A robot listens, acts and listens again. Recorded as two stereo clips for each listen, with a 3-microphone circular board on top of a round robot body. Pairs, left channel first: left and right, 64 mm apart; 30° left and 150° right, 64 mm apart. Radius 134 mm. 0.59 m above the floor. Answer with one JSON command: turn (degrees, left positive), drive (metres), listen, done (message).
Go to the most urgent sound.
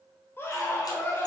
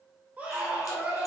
{"turn": 145}
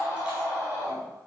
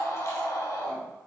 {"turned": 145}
{"turn": 60}
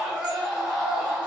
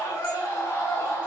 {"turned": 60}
{"drive": 1.0}
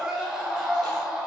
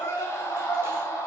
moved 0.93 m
{"turn": -10}
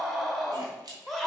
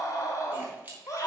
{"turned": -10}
{"drive": 1.0}
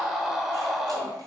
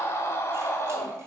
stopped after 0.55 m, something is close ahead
{"done": "I am next to the scream."}